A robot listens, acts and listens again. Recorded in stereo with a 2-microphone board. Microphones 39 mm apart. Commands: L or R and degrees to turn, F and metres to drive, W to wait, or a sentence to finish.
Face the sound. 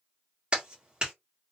R25
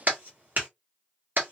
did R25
R125
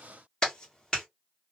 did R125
L20
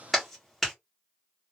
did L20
Found it: a clap, straight ahead, 1 to 2 m away.